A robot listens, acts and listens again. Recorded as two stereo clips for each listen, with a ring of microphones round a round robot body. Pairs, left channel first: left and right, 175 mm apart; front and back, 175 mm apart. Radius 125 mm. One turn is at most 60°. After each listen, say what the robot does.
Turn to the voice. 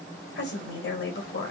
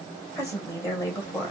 Turn 60° left.
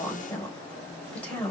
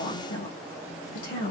Facing the woman speaking.